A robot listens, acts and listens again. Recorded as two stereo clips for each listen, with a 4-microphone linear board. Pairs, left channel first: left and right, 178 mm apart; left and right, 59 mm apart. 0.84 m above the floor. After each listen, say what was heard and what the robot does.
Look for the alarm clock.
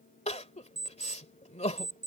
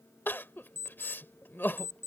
The alarm clock: about 50° right or 130° right. Turn 50° right.
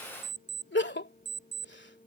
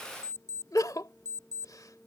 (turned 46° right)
So it is at 80° right. Turn 80° right.
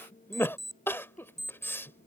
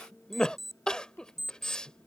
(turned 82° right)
Found it: an alarm clock, straight ahead.